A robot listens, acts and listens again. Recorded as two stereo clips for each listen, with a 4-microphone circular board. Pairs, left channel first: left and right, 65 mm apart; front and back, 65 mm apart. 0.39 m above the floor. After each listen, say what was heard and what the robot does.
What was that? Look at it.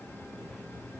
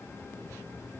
Keep listening.
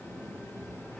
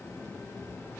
Keep listening.
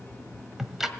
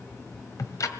Facing the ticking.